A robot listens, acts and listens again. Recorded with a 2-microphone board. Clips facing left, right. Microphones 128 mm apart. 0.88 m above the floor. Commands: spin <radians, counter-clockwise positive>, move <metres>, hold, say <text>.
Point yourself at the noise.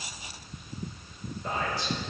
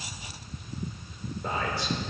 spin -1.13
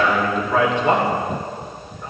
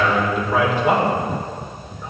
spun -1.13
say Facing the man speaking, 2 to 4 m away.